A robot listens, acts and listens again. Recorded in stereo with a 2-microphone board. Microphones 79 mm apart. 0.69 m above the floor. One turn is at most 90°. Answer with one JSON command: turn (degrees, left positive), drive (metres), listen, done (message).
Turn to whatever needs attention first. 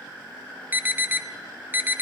{"turn": -25}
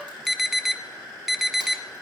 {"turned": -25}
{"done": "Found it: an alarm, straight ahead."}